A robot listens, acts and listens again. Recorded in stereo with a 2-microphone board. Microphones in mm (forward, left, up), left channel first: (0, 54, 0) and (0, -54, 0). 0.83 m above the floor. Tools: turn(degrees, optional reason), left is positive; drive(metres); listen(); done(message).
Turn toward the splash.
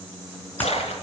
turn(degrees=90)
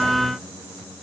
done("Facing where the splash came from. I can't hear it now.")